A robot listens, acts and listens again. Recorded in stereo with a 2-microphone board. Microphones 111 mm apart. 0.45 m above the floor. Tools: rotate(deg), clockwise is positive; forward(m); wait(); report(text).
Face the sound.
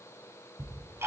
rotate(25)
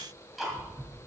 report("Facing the ticking, 2 to 4 m away.")